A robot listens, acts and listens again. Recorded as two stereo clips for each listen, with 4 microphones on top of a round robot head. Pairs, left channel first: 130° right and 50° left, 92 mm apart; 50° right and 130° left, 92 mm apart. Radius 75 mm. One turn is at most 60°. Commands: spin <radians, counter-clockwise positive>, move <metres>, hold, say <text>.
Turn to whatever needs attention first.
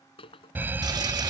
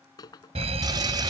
spin 1.05
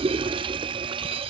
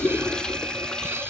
spin 1.05
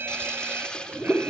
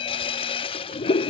spin -0.35
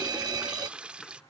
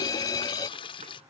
say Found it: a fire alarm, straight ahead.